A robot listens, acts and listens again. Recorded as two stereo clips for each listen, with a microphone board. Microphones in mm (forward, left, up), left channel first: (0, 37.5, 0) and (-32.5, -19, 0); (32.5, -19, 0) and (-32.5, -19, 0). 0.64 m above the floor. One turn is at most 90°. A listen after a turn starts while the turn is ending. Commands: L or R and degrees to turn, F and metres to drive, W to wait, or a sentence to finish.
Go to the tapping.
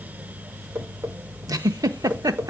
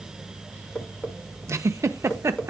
R70
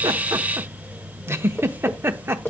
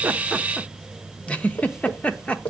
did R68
F1.0
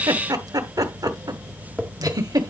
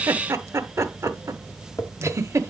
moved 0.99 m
R10
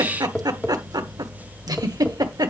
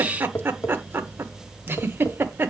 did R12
F1.0
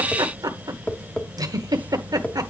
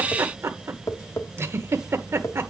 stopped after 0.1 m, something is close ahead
I am next to the tapping.